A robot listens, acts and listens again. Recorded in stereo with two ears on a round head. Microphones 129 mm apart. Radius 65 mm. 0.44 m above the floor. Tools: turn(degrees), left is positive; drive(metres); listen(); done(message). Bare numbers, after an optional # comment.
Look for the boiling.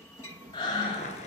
# The boiling: about 55° left or 125° left.
turn(55)
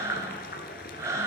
# So it is at 70° left.
turn(70)
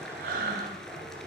done("Found it: boiling, straight ahead, 1 to 2 m away.")